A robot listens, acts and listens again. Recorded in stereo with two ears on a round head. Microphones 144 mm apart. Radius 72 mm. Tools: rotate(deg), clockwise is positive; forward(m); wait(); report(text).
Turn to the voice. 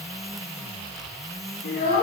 rotate(-75)
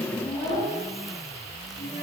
rotate(-30)
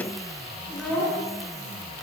rotate(-10)
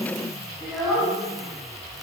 report("Facing the child speaking.")